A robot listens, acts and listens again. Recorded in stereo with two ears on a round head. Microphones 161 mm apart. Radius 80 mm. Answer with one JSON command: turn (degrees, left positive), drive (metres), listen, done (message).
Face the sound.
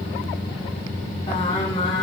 {"turn": 35}
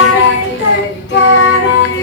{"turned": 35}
{"turn": 110}
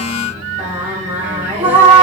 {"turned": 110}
{"turn": -15}
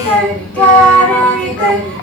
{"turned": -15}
{"done": "Facing the singing."}